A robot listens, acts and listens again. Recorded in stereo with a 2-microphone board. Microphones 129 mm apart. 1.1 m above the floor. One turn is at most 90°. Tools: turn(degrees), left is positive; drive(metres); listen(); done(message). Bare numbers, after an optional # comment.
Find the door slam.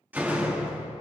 turn(-30)
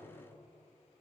listen()
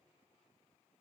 done("I heard a door slam, but can't make it out now. It was about 15° left or 135° right.")